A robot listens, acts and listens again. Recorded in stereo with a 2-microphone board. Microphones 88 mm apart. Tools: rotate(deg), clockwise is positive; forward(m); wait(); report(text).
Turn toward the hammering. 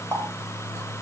wait()
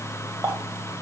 wait()
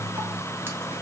report("I can't make out hammering to turn to.")